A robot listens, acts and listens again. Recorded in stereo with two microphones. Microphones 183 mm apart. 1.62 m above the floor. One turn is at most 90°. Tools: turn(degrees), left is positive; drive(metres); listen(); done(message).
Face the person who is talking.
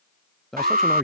turn(degrees=30)
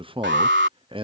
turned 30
turn(degrees=-30)
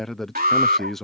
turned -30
done("Facing the man speaking.")